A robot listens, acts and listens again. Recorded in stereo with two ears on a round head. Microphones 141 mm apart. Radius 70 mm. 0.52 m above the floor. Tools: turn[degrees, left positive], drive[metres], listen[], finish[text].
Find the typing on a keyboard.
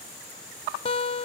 Action: listen[]
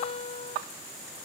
Action: listen[]
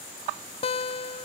Action: finish[I can't make out typing on a keyboard to turn to.]